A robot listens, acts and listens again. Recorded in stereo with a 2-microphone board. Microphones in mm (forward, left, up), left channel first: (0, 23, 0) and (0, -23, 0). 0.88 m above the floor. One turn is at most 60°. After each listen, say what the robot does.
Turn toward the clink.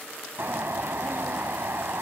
Keep listening.
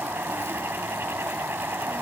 Keep listening.
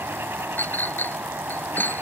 Turn 45° left.
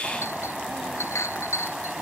Turn 60° left.
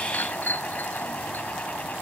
Turn 40° left.
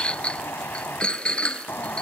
Turn 20° left.
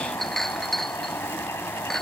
Found it: a clink, straight ahead.